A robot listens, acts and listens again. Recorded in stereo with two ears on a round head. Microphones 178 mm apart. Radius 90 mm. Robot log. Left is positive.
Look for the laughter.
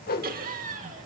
note: The laughter: about 40° right or 140° right.
cmd yaw -40
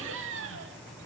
note: So it is at 115° right.
cmd yaw -115
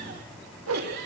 note: The laughter is now 50° right.
cmd yaw -50
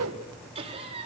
note: The laughter is now 30° right.
cmd yaw -30
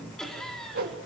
end: Facing the laughter, over 4 m away.